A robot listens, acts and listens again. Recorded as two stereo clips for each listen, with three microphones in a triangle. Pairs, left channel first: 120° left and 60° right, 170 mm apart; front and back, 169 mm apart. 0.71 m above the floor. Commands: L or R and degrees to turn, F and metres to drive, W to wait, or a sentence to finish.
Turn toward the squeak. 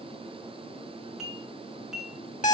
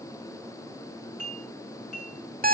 W
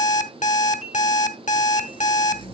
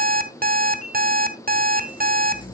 L60
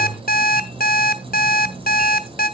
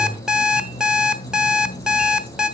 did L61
Facing the squeak.